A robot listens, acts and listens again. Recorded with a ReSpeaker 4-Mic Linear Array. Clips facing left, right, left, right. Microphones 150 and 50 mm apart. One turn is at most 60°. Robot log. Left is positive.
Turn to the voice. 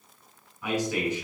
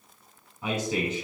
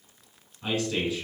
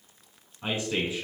note: The man speaking: about 25° right or 155° right.
cmd yaw -25
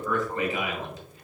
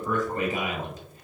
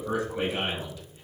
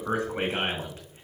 note: So it is at 130° right.
cmd yaw -60
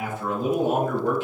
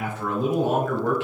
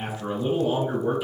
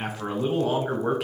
note: The man speaking is now 95° right.
cmd yaw -60
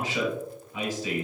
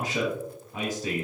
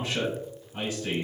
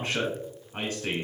note: The man speaking is now 45° right.
cmd yaw -45
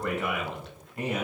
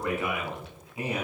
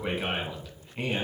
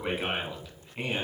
end: Facing the man speaking, 2 to 4 m away.